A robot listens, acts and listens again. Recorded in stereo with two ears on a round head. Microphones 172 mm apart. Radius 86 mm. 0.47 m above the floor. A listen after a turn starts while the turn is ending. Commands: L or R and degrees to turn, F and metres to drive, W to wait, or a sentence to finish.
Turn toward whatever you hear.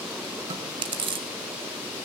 R30
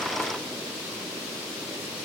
W
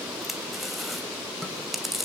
Found it: chewing, straight ahead, 1 to 2 m away.